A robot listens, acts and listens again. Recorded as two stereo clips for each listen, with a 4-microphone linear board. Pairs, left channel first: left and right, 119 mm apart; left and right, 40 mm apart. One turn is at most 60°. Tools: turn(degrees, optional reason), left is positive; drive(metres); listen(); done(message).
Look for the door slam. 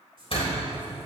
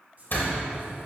turn(degrees=55, reason="The door slam: about 55° left or 125° left.")
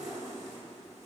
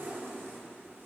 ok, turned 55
listen()
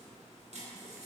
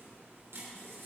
done("I heard a door slam, but can't make it out now. It was about straight ahead or 70° left.")